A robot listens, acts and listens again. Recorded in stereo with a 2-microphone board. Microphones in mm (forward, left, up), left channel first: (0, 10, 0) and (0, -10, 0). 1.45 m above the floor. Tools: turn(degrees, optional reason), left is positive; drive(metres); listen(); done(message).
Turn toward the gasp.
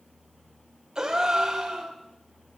turn(degrees=-30, reason="The gasp: about 30° right or 150° right.")
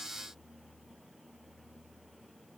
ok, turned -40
listen()
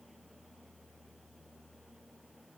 done("I heard a gasp, but can't make it out now. It was about 10° left or 110° right.")